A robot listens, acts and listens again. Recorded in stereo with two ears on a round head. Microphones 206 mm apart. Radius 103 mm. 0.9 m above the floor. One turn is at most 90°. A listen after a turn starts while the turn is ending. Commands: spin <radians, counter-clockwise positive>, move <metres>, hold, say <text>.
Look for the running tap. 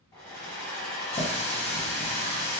spin 0.44
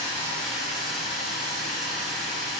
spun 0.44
say Found it: a running tap, straight ahead.